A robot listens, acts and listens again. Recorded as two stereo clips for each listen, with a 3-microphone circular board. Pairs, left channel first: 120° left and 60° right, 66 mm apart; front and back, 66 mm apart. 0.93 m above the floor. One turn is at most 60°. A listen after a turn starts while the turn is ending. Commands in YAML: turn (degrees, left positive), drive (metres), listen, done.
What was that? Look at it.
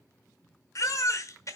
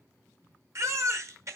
turn: 60
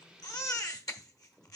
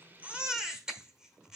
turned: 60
turn: 60
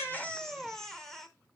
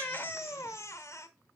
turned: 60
turn: 40
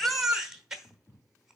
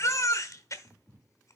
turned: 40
turn: 20
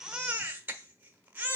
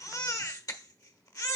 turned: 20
done: "Found it: a baby crying, straight ahead."